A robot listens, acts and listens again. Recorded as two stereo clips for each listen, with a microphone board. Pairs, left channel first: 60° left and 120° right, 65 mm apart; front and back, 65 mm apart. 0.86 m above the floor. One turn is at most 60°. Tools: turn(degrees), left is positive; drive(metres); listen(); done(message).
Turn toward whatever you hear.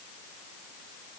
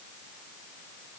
listen()
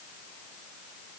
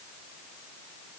listen()
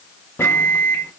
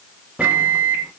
turn(degrees=60)
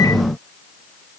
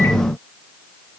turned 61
turn(degrees=50)
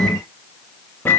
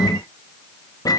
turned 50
done("Found it: a microwave, straight ahead, under 1 m away.")